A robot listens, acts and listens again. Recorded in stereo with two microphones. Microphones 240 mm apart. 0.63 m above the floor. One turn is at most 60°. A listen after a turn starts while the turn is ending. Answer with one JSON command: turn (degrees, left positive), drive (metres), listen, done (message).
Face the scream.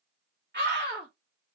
{"turn": -45}
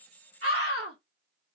{"turn": -60}
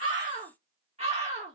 {"turn": -30}
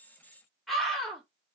{"done": "Found it: a scream, straight ahead."}